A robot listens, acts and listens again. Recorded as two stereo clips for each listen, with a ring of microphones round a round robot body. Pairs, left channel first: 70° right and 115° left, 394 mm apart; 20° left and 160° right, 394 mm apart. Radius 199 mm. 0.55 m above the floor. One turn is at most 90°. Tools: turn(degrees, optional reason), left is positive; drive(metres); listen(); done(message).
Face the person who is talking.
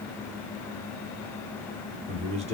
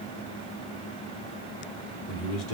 turn(degrees=40, reason="The man speaking: 40° left.")
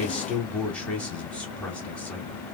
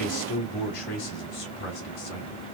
turn(degrees=20, reason="The man speaking is now 20° left.")
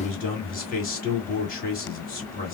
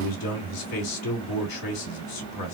done("Facing the man speaking, 1 to 2 m away.")